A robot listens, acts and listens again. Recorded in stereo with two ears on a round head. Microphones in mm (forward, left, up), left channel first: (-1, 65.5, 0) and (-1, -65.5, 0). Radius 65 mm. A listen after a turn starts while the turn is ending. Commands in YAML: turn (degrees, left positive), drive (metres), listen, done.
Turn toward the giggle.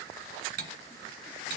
listen: true
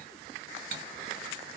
listen: true
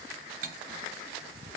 done: "I can't make out a giggle, only cutlery clinking."